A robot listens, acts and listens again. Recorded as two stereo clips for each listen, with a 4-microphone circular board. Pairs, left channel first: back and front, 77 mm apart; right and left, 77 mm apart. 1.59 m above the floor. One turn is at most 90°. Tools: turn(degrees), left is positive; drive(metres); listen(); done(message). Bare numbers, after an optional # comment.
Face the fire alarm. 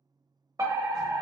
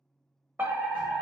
# The fire alarm: 30° left.
turn(30)
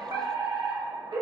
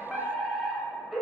done("Facing the fire alarm.")